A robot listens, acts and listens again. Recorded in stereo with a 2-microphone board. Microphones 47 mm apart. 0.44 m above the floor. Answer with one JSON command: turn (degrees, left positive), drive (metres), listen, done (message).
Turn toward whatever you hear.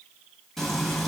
{"turn": 30}
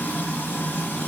{"turn": 140}
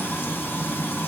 {"turn": 50}
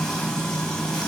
{"turn": 15}
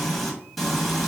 {"done": "Facing the frying, 1 to 2 m away."}